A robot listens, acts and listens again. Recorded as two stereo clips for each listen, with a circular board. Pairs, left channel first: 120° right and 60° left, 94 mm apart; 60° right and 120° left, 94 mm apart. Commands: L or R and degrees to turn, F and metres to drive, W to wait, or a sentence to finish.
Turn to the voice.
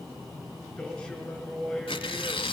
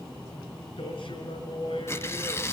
R40
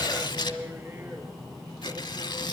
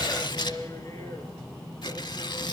Found it: a man speaking, straight ahead.